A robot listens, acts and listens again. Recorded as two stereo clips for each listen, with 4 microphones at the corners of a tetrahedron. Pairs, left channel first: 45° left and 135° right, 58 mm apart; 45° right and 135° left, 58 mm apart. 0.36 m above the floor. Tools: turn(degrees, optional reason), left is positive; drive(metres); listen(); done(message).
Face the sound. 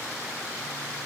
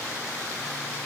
listen()
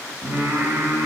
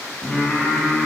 turn(degrees=-135, reason="The singing: 135° right.")
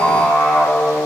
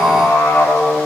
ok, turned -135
turn(degrees=-45, reason="The singing is now 45° right.")
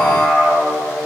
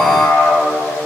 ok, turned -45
turn(degrees=-20, reason="The singing is now 20° right.")
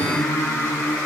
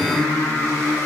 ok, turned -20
done("Found it: singing, straight ahead, over 4 m away.")